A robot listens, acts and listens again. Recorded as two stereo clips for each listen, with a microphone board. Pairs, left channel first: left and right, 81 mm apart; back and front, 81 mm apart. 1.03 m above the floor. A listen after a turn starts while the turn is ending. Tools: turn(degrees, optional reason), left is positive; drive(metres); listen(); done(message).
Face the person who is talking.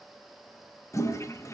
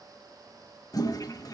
listen()
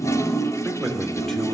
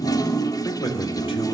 turn(degrees=175, reason="The man speaking: 175° left.")
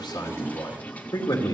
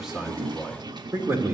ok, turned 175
turn(degrees=60, reason="The man speaking is now 60° left.")
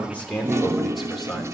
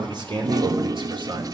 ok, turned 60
done("Facing the man speaking, 2 to 4 m away.")